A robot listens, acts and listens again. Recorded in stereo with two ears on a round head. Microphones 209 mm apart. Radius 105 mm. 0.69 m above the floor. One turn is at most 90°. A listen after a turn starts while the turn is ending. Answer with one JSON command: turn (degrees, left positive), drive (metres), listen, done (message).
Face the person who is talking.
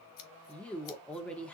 {"turn": 30}
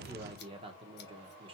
{"turn": -25}
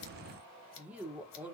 {"done": "Facing the woman speaking, 1 to 2 m away."}